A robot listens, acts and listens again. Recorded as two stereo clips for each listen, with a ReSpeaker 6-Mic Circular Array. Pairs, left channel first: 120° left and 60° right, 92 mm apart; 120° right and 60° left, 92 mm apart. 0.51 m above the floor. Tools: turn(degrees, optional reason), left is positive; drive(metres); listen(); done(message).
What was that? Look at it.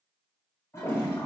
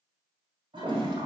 turn(degrees=65, reason="The toilet flushing: 65° left.")
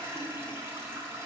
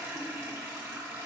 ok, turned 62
done("Facing the toilet flushing.")